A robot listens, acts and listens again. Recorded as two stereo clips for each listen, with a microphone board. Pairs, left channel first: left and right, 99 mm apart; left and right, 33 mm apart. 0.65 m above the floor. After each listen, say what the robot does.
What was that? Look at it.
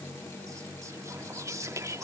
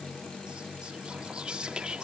Turn 30° right.
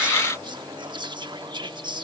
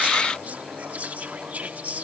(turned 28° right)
Turn 115° right.
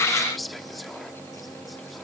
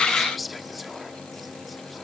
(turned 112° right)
Facing the whispering.